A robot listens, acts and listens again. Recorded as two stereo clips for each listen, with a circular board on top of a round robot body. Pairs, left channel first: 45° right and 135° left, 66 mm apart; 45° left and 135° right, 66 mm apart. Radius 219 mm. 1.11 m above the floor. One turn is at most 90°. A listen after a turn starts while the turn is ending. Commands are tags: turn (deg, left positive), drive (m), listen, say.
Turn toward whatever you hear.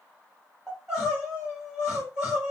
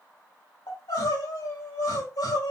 <turn deg="55"/>
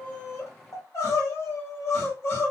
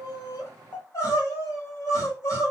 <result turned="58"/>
<say>Found it: crying, straight ahead, 2 to 4 m away.</say>